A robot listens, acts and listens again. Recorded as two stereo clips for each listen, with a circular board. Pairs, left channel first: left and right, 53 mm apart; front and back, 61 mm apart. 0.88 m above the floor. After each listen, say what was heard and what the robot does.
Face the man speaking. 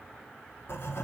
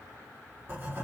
Keep listening.
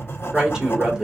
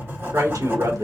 The man speaking: 165° right. Turn 165° right.
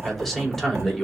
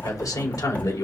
Facing the man speaking.